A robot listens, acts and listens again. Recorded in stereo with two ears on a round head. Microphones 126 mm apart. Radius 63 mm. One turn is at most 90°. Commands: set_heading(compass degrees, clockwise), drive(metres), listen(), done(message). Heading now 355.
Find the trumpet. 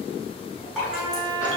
set_heading(40)
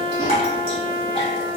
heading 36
set_heading(126)
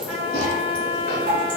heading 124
done("Found it: a trumpet, straight ahead.")